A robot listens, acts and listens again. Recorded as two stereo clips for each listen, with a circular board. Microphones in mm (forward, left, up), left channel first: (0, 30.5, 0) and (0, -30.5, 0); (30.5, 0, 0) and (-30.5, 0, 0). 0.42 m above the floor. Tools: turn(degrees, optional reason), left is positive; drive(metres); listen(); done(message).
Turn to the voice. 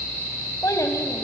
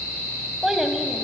turn(degrees=95, reason="The child speaking: 95° left.")
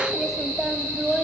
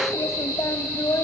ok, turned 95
turn(degrees=-10, reason="The child speaking is now 10° right.")
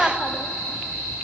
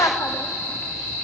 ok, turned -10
done("Facing the child speaking.")